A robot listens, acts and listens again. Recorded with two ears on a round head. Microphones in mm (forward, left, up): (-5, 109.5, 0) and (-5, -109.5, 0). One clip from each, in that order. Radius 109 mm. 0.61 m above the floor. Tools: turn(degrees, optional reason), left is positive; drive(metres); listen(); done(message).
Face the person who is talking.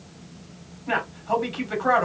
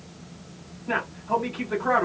turn(degrees=55, reason="The man speaking: about 55° left or 125° left.")
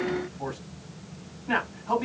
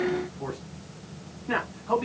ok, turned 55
turn(degrees=15, reason="So it is at 15° left.")
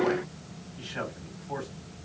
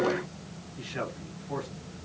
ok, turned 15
done("Found it: a man speaking, straight ahead.")